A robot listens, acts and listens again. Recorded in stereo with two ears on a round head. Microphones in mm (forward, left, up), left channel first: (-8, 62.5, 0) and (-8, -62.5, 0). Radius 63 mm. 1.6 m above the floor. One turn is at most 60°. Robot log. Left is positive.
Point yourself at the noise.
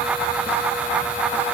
cmd idle
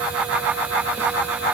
cmd idle
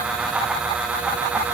end: I can't make out anything to turn to.